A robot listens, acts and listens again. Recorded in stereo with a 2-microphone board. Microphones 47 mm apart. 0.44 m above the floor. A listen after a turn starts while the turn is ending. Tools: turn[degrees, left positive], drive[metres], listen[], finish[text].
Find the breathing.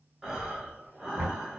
Action: turn[-30]
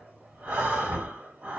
Thought: So it is at 140° right.
Action: turn[-140]
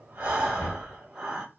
Thought: The breathing is now 20° right.
Action: turn[-20]
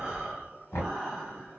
Action: finish[Facing the breathing.]